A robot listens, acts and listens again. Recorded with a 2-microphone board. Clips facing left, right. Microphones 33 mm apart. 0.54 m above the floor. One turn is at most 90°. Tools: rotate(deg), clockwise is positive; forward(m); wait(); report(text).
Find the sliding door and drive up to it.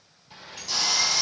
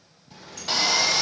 rotate(-25)
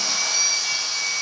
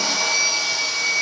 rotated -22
wait()
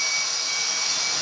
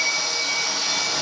wait()
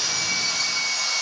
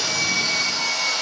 report("I heard a sliding door, but can't make it out now. It was about straight ahead or 135° left. I did not reach it.")